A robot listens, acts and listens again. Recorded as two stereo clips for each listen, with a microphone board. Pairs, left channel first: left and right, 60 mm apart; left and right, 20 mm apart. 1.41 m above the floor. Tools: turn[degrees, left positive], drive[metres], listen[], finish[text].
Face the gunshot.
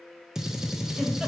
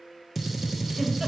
Action: turn[-30]
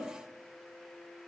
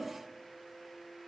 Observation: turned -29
Action: listen[]
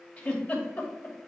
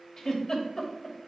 Action: finish[I heard a gunshot, but can't make it out now. It was about 25° left or 145° right.]